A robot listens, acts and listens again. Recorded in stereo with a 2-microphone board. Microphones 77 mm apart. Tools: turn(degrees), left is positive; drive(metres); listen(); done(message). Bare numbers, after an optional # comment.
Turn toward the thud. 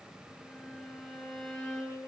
listen()
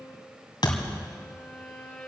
# The thud: about 70° left or 110° left.
turn(70)
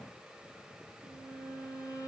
listen()
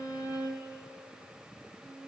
done("I heard a thud, but can't make it out now. It was about straight ahead or 40° left.")